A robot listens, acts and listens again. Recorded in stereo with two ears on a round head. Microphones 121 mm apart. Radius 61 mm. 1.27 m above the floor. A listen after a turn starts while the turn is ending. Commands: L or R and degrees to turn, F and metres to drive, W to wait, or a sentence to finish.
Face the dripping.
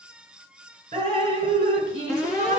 R45
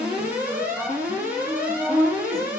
Found it: dripping, straight ahead.